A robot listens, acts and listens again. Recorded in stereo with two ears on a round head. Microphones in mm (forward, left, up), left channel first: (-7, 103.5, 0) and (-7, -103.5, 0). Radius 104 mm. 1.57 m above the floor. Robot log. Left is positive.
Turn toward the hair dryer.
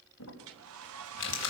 note: The hair dryer: about 65° right or 115° right.
cmd yaw -65
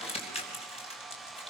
end: Found it: a hair dryer, straight ahead.